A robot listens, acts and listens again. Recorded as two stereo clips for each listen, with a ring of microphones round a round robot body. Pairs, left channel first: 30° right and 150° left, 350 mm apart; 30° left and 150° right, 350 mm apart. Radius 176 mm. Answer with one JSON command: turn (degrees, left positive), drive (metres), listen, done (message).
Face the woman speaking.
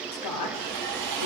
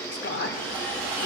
{"turn": -25}
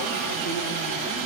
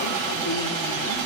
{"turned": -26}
{"listen": true}
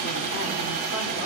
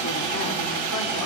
{"listen": true}
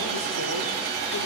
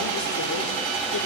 {"done": "I heard a woman speaking from this way, but can't make it out now."}